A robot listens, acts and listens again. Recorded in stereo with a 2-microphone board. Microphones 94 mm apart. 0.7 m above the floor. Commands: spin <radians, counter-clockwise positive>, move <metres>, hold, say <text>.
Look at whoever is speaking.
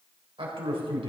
spin -1.22
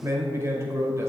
spin -0.52
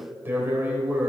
spin -0.44
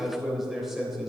say Found it: a man speaking, straight ahead.